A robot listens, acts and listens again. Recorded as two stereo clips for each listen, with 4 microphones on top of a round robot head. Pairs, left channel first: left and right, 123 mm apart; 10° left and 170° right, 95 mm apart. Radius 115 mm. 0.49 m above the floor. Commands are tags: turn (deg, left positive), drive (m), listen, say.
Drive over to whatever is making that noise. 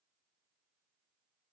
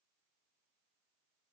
<listen/>
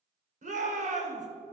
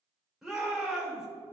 <turn deg="-80"/>
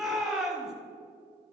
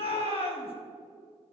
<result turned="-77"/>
<drive m="1.0"/>
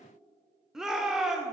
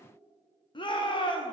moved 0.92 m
<drive m="1.0"/>
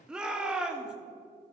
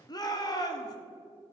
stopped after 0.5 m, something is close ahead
<turn deg="-10"/>
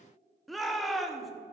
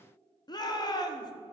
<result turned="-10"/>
<say>Arrived at the shout, straight ahead.</say>